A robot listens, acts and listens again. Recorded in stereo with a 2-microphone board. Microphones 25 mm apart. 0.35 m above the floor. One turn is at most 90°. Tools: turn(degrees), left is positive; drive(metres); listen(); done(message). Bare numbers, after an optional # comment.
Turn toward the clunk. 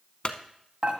# The clunk: about 40° left or 140° left.
turn(40)
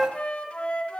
listen()
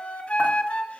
done("I heard a clunk, but can't make it out now. It was about straight ahead or 100° left.")